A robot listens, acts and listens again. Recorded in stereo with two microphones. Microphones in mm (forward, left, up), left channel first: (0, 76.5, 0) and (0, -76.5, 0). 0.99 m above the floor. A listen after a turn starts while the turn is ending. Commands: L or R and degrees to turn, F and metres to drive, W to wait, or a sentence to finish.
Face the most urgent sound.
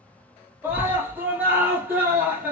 R30
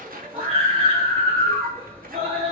R135
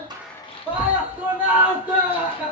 R10
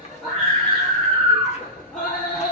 Found it: a scream, straight ahead.